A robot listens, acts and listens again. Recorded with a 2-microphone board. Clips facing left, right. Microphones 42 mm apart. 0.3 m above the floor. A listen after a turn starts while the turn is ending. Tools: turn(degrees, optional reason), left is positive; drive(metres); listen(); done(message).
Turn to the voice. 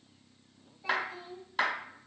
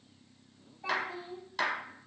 turn(degrees=-60, reason="The child speaking: about 60° right or 120° right.")
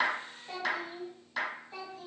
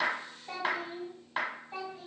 turn(degrees=-30, reason="So it is at 30° right.")
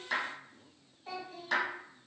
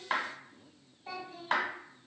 turn(degrees=-10, reason="The child speaking is now 10° right.")
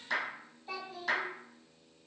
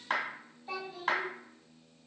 done("Found it: a child speaking, straight ahead, 1 to 2 m away.")